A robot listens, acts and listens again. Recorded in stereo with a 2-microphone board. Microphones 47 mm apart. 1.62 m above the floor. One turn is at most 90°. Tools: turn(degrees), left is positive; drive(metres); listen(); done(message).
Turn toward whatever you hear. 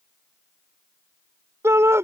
turn(degrees=-90)
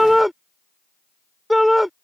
done("Facing the shout.")